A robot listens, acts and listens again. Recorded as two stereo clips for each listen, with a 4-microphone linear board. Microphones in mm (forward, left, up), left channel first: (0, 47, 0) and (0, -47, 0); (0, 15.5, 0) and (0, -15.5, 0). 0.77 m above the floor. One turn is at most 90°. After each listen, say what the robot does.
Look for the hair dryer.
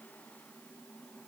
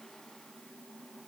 Keep listening.
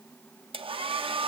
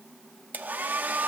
Turn 70° right.
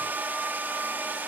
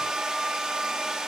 Turn 20° right.
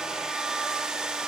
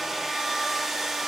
Found it: a hair dryer, straight ahead.